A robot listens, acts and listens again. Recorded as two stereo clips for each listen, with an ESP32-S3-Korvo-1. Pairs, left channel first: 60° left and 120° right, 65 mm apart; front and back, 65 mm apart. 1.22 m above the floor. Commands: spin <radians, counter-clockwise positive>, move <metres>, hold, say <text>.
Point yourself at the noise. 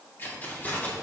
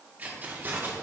spin 2.18
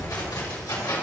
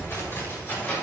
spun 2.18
spin 1.05
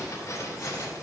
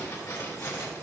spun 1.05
spin 0.52
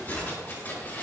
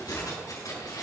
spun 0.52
say Found it: keys jangling, straight ahead.